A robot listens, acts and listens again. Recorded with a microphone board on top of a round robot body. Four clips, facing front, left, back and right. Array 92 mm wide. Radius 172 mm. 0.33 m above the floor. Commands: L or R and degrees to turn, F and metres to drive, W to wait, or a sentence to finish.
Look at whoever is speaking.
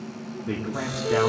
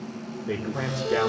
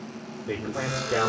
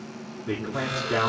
R45
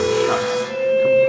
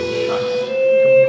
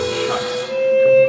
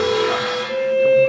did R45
W
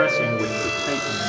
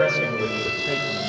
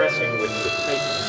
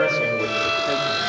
W
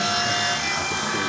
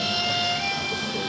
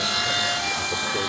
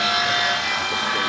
I heard a man speaking from this way, but can't make it out now.